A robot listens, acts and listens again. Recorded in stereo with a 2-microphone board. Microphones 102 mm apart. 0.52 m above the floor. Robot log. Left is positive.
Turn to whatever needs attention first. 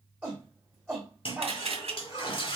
cmd yaw -30
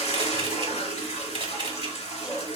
note: So it is at 15° left.
cmd yaw +15
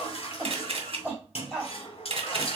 end: Found it: a shout, straight ahead, 1 to 2 m away.